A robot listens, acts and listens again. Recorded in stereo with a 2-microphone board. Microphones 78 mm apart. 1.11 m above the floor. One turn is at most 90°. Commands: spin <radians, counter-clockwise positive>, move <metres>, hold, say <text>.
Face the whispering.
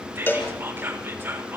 spin -0.44
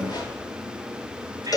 hold
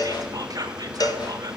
spin -1.57
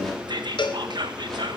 spin -1.31
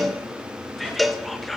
say Facing the whispering.